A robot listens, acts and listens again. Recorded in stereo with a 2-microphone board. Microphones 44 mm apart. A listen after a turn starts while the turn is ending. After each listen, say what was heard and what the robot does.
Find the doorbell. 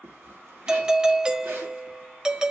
The doorbell: about 20° right or 160° right. Turn 20° right.
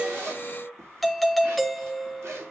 Found it: a doorbell, straight ahead, under 1 m away.